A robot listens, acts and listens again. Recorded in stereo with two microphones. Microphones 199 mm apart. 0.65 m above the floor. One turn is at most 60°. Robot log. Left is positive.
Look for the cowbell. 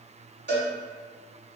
note: The cowbell: about 65° right or 115° right.
cmd yaw -60
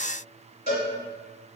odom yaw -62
note: So it is at 45° right.
cmd yaw -45
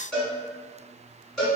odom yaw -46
end: Facing the cowbell.